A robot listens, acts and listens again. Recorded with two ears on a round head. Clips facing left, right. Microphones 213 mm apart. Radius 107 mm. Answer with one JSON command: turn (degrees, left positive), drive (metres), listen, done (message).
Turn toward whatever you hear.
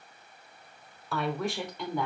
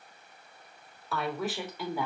{"turn": -30}
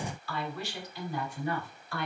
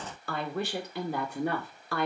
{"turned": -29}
{"turn": -120}
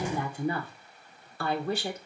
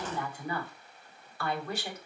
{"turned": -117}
{"turn": 25}
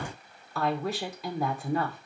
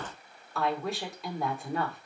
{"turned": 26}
{"done": "Facing the woman speaking, 2 to 4 m away."}